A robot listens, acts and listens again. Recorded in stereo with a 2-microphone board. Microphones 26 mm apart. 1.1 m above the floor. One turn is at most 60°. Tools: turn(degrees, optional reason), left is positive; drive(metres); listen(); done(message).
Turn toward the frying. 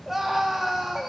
listen()
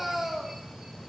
listen()
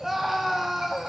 done("I can't make out frying to turn to.")